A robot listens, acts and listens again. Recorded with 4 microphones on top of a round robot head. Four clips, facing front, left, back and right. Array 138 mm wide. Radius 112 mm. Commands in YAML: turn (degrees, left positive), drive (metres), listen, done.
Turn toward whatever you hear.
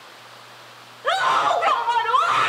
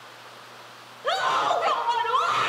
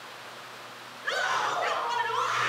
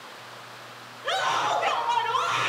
turn: 30
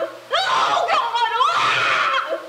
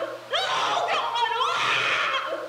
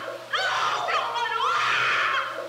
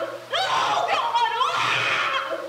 turn: 10
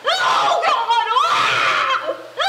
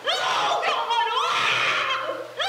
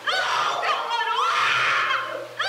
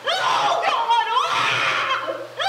done: "Facing the scream, over 4 m away."